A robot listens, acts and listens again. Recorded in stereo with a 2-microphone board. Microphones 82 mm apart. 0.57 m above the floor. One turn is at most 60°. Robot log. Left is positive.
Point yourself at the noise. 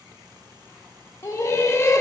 note: The laughter: about 40° left or 140° left.
cmd yaw +40
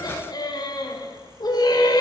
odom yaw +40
note: So it is at 90° left.
cmd yaw +60
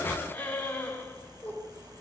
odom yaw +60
note: The laughter is now 25° left.
cmd yaw +25
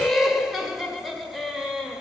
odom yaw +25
end: Facing the laughter, 1 to 2 m away.